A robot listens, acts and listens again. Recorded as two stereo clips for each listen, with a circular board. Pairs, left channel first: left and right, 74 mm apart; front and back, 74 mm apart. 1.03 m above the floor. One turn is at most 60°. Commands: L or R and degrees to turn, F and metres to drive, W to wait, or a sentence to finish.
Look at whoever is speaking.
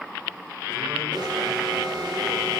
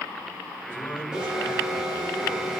W
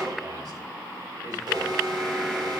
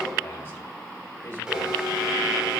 W
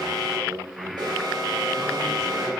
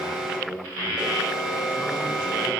R60
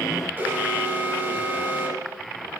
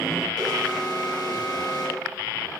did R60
W
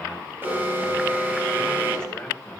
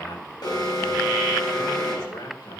L15
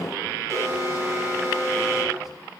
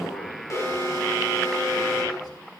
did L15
W
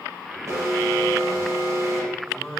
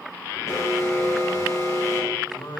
Found it: a man speaking, straight ahead.